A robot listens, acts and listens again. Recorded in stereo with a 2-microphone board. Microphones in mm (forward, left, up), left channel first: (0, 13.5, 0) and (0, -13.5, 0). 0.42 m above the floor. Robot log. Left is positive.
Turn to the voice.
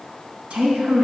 note: The woman speaking: about 75° right or 105° right.
cmd yaw -75
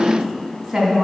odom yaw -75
note: So it is at 10° right.
cmd yaw -10
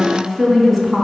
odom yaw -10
end: Facing the woman speaking.